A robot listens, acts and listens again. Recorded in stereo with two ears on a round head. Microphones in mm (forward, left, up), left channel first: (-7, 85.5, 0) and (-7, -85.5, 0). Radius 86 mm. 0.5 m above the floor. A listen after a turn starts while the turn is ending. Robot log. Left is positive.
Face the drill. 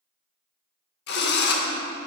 note: The drill: about 55° left or 125° left.
cmd yaw +55
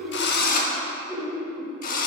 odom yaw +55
note: So it is at 50° left.
cmd yaw +50
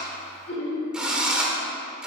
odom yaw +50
end: Facing the drill.